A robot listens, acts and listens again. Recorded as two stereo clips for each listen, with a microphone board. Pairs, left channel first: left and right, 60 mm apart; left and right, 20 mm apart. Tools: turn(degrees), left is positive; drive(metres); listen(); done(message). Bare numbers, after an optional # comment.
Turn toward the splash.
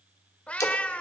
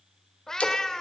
# The splash: about 65° left or 115° left.
turn(65)
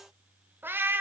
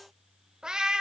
listen()
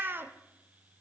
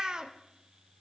done("I heard a splash, but can't make it out now. It was about straight ahead or 50° left.")